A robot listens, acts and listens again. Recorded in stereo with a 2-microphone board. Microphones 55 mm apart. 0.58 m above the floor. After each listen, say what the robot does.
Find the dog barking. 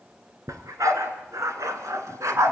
Turn 70° right.
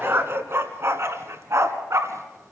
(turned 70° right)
Turn 65° right.
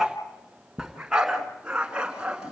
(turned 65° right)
Turn 20° right.
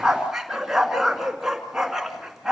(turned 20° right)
Facing the dog barking, 2 to 4 m away.